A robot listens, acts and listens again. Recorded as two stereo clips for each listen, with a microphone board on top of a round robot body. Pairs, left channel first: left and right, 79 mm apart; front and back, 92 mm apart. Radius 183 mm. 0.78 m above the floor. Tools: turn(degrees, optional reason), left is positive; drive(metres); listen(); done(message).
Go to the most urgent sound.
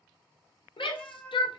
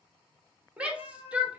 turn(degrees=100, reason="The shout: 100° left.")
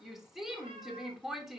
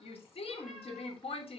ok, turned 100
drive(metres=1.0)
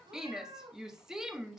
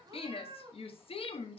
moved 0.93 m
drive(metres=1.0)
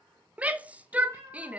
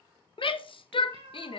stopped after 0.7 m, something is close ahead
turn(degrees=-15, reason="The shout is now 15° right.")
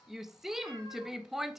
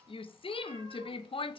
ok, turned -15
done("I am next to the shout.")